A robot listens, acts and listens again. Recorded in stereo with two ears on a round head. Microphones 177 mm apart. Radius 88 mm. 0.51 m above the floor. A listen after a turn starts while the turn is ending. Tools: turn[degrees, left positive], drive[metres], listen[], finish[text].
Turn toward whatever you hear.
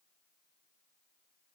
Action: listen[]
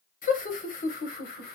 Thought: The laughter: about 50° left or 130° left.
Action: turn[50]
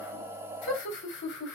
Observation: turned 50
Thought: So it is at 60° left.
Action: turn[60]
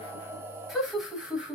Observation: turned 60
Action: finish[Found it: laughter, straight ahead, 2 to 4 m away.]